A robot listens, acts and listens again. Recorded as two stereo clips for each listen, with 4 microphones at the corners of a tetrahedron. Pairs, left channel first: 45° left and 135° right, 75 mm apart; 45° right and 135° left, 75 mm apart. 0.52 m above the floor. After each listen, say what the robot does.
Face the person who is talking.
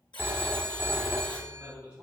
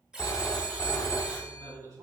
Turn 150° left.
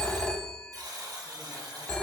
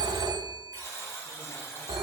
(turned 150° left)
Keep listening.
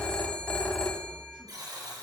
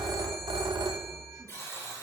Keep listening.
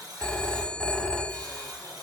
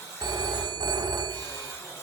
I heard a man speaking from this way, but can't make it out now.